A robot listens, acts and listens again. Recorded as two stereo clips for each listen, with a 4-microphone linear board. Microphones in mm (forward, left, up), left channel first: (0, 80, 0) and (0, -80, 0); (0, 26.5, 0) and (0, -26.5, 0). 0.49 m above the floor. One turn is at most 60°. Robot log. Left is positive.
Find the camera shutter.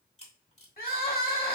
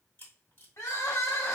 note: The camera shutter: about 45° left or 135° left.
cmd yaw +45
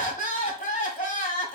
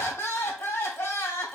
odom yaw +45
cmd idle
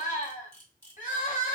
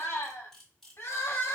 note: So it is at 20° left.
cmd yaw +20
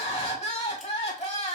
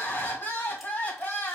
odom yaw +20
cmd idle
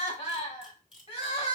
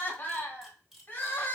end: Found it: a camera shutter, straight ahead.